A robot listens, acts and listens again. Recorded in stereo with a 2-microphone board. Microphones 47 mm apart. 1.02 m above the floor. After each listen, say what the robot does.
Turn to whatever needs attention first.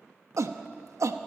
Turn 90° right.
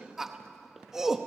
Found it: a shout, straight ahead.